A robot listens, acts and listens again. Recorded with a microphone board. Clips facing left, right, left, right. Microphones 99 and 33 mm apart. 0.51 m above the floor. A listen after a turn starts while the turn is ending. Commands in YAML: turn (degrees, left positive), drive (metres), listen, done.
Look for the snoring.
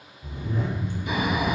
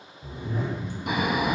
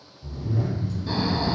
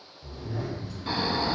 turn: -75
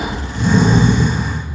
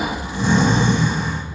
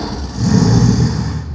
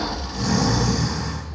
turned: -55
turn: -25
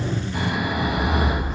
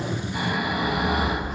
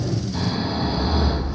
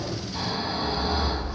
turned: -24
done: "Found it: snoring, straight ahead, under 1 m away."